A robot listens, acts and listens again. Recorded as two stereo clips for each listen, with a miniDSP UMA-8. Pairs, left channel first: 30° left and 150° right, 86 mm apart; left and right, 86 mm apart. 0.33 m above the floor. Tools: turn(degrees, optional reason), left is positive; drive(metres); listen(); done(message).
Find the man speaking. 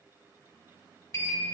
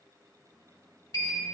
listen()
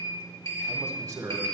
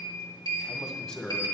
turn(degrees=175, reason="The man speaking: 175° left.")
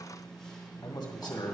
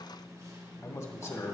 turn(degrees=50, reason="The man speaking is now 50° left.")
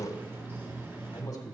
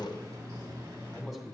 done("Facing the man speaking.")